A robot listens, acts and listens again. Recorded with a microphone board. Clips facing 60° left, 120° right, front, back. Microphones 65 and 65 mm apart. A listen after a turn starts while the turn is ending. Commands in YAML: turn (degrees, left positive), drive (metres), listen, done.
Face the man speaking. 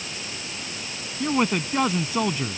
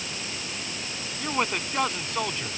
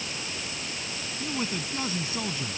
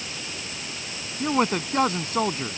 turn: 140
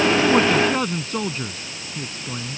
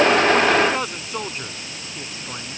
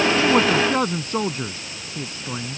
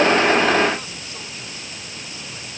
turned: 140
turn: -45
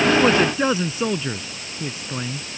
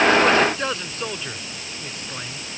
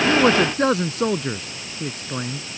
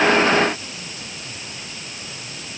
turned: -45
turn: -25
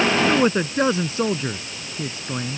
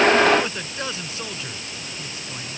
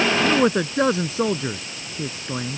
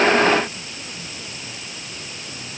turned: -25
done: "Facing the man speaking."